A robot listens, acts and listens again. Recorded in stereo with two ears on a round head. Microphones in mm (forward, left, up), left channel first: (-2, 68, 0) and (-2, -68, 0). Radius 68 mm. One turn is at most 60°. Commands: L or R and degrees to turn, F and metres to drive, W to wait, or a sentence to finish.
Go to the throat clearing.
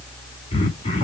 L40
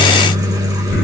W
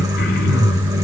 L60
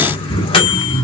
L35
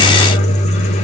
W
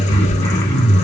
L20
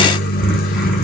W
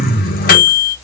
F1.0
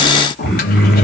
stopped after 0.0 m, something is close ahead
Blocked. The throat clearing is further on, straight ahead.